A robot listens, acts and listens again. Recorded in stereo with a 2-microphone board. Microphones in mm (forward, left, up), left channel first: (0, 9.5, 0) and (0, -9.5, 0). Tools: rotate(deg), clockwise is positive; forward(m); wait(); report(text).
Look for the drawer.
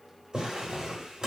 rotate(40)
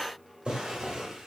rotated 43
rotate(95)
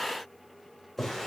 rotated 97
report("Facing the drawer.")